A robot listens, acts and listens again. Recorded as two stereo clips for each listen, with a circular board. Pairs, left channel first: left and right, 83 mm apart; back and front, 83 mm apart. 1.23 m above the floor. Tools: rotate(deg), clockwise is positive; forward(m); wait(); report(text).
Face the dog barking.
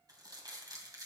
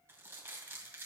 wait()
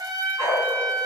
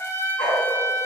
rotate(-180)
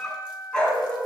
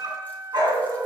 rotate(-15)
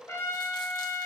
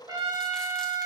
wait()
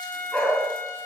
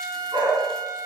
rotate(-10)
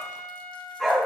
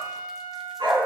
report("Facing the dog barking, 2 to 4 m away.")